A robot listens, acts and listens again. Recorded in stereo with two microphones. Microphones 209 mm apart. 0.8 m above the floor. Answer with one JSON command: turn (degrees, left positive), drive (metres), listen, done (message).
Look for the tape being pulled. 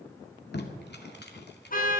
{"turn": 55}
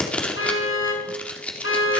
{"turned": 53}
{"done": "Facing the tape being pulled, 2 to 4 m away."}